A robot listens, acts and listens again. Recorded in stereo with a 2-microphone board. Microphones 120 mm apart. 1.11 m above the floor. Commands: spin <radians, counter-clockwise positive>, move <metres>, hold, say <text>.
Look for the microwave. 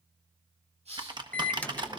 spin 0.52
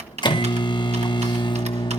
spin 2.44
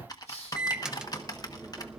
say Found it: a microwave, straight ahead, under 1 m away.